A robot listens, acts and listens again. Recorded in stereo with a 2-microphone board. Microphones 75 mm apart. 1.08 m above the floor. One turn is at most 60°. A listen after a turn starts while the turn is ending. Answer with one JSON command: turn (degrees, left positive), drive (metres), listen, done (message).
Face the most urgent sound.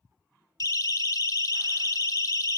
{"turn": 55}
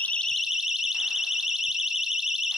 {"done": "Found it: a siren, straight ahead."}